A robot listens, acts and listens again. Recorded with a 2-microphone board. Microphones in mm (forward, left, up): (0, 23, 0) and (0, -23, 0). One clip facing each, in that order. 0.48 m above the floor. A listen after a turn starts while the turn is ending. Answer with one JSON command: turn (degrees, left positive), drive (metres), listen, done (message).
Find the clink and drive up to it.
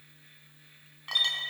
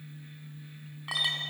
{"turn": -30}
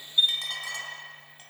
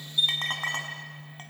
{"turn": -135}
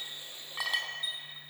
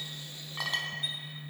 {"drive": 1.0}
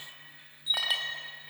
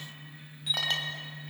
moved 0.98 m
{"turn": 10}
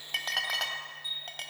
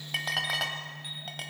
{"drive": 1.0}
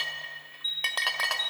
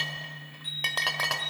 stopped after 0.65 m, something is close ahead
{"done": "Arrived at the clink, straight ahead."}